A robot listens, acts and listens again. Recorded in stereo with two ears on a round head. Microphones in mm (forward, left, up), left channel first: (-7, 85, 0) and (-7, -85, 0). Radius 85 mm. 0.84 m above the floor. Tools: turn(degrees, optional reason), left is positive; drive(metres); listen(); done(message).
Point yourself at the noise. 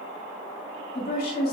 turn(degrees=50, reason="The woman speaking: about 50° left or 130° left.")
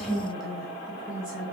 turn(degrees=-10, reason="So it is at 10° right.")
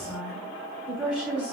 done("Facing the woman speaking.")